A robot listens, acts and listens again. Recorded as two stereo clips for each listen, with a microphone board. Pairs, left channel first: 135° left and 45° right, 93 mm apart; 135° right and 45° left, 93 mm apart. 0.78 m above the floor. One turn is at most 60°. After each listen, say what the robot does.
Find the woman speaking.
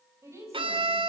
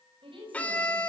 Turn 15° left.
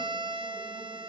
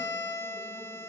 Keep listening.
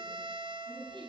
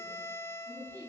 Found it: a woman speaking, straight ahead, over 4 m away.